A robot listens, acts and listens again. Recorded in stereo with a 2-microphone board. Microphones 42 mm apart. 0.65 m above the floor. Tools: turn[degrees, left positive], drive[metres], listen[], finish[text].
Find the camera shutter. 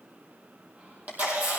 Thought: The camera shutter: about 45° right or 135° right.
Action: turn[-45]
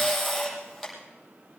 Action: finish[Facing the camera shutter.]